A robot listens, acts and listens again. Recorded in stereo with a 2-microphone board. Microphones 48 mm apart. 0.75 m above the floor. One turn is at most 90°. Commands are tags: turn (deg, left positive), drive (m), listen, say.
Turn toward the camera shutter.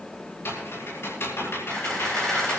<turn deg="30"/>
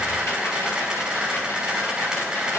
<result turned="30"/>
<turn deg="-20"/>
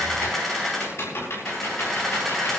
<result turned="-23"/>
<say>Found it: a camera shutter, straight ahead.</say>